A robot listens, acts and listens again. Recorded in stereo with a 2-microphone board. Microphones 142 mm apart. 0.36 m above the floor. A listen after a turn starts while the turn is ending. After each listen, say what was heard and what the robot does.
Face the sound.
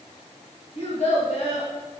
The child speaking: about 55° left or 125° left. Turn 55° left.
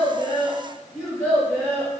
So it is at 10° left. Turn 10° left.
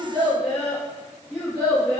The child speaking is now 10° left. Turn 10° left.
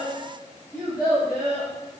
Facing the child speaking, over 4 m away.